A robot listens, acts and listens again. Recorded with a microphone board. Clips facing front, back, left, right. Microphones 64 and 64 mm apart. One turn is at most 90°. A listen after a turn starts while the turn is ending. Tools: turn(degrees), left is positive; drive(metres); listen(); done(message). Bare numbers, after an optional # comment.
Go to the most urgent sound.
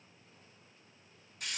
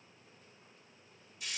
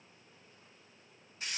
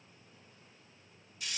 listen()
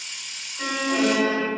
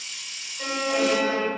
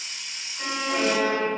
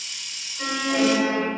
drive(1.0)
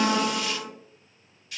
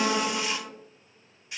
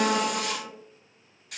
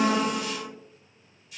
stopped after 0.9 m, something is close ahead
# The alarm is now 15° right.
turn(-15)
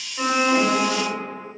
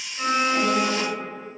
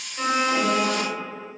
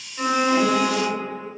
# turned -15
done("I am next to the alarm.")